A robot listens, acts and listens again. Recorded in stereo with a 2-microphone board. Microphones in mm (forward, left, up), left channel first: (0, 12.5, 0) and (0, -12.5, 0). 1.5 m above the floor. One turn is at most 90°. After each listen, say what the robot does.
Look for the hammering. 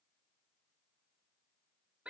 Keep listening.
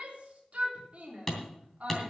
Turn 30° left.
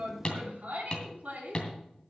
Turn 90° left.
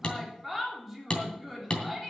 Turn 50° left.
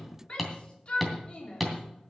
Found it: hammering, straight ahead.